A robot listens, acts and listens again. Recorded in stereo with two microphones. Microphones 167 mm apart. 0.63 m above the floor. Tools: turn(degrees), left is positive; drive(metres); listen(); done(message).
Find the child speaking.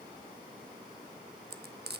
listen()
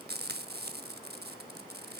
listen()
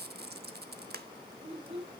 turn(degrees=-35)
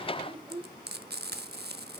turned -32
done("Facing the child speaking, 2 to 4 m away.")